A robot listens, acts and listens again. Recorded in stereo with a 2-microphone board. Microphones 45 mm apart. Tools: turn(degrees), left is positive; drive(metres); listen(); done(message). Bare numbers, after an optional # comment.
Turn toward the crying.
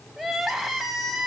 turn(-30)
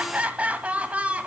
# So it is at 145° right.
turn(-145)
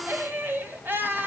# The crying is now 50° right.
turn(-50)
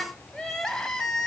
# The crying is now 10° left.
turn(10)
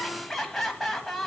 done("Found it: crying, straight ahead.")